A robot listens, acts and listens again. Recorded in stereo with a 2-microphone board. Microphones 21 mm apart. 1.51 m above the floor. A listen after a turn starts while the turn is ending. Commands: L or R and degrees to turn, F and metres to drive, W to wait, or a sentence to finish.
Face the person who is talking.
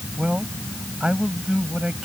R65
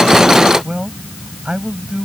R55
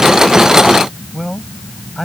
Found it: a man speaking, straight ahead.